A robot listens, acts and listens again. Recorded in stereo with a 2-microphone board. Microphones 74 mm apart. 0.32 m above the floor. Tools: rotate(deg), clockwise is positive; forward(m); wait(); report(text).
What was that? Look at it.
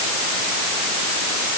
wait()
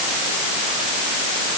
wait()
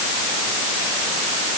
report("I can't make out anything to turn to.")